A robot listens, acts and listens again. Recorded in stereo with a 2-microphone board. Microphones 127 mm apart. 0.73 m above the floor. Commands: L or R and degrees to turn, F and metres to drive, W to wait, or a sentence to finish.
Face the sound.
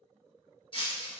L45
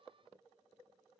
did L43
W
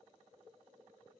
I heard breaking glass, but can't make it out now. It was about straight ahead or 95° left.